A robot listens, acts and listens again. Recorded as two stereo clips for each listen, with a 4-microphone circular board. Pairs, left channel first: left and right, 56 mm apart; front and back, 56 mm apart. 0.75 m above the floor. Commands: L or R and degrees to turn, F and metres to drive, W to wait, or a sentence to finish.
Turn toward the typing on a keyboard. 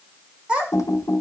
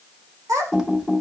L105
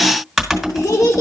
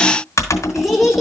Facing the typing on a keyboard, 2 to 4 m away.